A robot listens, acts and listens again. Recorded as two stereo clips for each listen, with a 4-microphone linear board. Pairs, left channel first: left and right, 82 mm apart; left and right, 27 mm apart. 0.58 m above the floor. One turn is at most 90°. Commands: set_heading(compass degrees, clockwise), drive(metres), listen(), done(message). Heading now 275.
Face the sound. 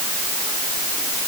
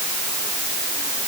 listen()
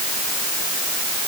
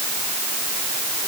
listen()
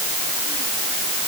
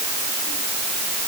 done("I can't make out anything.")